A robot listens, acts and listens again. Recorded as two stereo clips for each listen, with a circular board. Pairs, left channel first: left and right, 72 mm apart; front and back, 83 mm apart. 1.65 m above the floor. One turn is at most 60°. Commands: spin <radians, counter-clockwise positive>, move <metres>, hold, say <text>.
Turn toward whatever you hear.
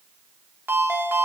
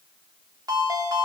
spin -1.05
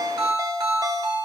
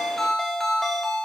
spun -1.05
spin -1.05
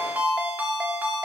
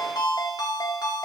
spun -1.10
spin -0.44
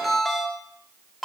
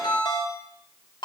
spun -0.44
say Found it: a ringtone, straight ahead, 2 to 4 m away.